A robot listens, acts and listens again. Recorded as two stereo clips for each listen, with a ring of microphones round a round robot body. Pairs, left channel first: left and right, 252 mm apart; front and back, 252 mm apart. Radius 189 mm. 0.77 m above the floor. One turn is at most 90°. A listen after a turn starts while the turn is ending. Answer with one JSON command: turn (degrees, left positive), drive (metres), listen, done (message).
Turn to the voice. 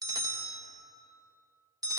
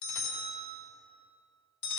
{"listen": true}
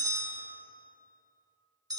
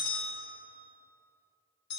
{"listen": true}
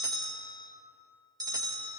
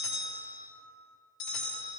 {"done": "I can't make out anyone speaking, only a bell."}